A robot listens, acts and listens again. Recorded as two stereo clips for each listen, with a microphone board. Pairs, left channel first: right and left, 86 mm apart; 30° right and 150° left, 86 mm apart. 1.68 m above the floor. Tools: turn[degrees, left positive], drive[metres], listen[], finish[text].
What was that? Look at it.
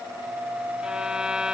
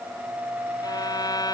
Thought: The violin: 10° left.
Action: turn[10]
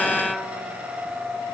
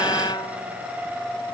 Action: finish[Found it: a violin, straight ahead.]